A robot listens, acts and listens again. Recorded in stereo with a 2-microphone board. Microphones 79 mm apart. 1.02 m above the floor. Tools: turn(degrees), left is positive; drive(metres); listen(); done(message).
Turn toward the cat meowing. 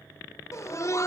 listen()
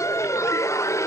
listen()
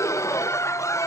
done("I can't make out a cat meowing to turn to.")